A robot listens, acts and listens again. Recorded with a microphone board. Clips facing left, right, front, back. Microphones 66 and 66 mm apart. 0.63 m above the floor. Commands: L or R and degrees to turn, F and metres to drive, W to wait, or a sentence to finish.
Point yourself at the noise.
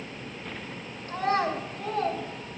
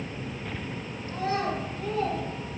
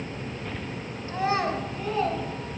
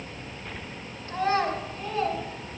L65
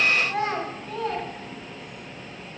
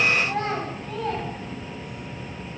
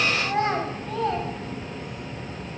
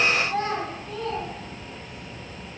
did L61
Found it: a child speaking, straight ahead, 2 to 4 m away.